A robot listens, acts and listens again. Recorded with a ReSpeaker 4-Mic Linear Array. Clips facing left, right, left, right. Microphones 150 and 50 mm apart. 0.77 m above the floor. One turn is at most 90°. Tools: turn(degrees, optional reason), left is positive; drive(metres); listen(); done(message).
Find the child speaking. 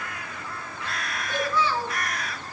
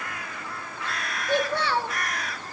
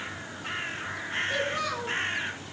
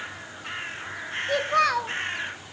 turn(degrees=-90)
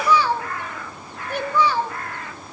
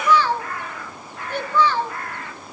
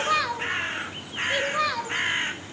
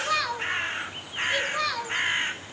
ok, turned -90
turn(degrees=15, reason="So it is at 15° left.")
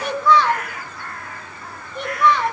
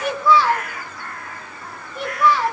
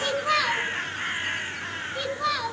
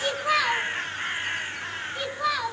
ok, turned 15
done("Found it: a child speaking, straight ahead.")